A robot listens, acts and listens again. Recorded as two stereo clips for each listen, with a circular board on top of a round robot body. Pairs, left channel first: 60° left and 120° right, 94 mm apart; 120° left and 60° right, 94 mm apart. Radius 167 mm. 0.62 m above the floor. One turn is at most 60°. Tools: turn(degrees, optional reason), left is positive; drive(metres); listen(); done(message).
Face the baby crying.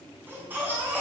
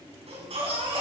turn(degrees=-50, reason="The baby crying: 50° right.")
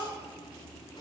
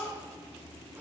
turn(degrees=15, reason="The baby crying is now 15° left.")
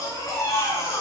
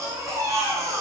done("Found it: a baby crying, straight ahead, over 4 m away.")